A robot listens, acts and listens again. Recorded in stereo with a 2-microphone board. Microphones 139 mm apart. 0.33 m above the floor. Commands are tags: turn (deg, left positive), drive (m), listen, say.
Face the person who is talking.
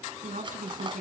<turn deg="-70"/>
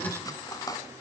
<listen/>
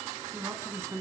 <turn deg="-20"/>
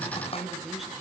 <say>Found it: a woman speaking, straight ahead, 2 to 4 m away.</say>